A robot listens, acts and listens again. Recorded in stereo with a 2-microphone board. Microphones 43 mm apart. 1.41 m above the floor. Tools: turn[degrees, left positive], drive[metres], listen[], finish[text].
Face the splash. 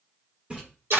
Thought: The splash: about 25° right or 155° right.
Action: turn[-25]
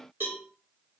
Action: listen[]
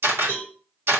Action: finish[I heard a splash, but can't make it out now. It was about straight ahead or 130° right.]